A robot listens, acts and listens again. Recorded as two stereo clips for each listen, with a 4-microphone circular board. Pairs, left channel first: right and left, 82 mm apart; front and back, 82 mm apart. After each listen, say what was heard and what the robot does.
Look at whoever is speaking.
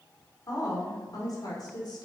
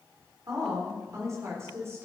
The woman speaking: 120° right. Turn 120° right.
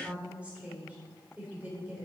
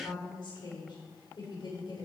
The woman speaking is now 25° left. Turn 25° left.
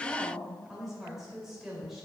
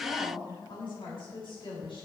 Found it: a woman speaking, straight ahead.